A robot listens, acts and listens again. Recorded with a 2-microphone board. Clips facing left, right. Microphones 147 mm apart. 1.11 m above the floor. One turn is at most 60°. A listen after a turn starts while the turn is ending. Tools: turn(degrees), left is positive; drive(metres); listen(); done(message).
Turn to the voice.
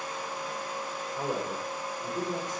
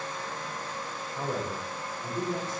turn(degrees=20)
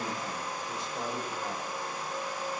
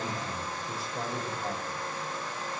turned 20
done("Facing the man speaking.")